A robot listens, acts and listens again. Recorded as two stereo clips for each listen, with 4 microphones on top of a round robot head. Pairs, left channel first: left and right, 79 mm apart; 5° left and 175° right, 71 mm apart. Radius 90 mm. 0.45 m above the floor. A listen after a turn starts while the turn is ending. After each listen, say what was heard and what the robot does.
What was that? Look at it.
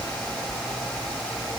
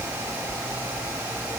Keep listening.
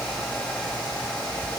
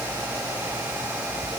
Keep listening.
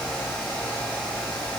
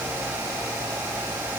I can't make out anything.